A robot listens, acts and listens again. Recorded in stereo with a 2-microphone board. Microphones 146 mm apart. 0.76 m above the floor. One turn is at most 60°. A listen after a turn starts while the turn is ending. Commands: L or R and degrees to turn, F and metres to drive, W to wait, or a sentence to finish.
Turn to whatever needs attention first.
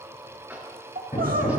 R60
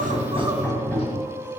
R25
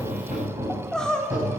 Found it: crying, straight ahead.